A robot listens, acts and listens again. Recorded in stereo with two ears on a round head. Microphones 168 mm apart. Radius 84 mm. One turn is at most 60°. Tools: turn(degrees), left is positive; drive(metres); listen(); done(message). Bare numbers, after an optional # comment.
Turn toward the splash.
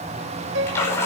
turn(30)
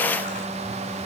listen()
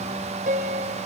done("I heard a splash, but can't make it out now. It was about 15° right or 135° left.")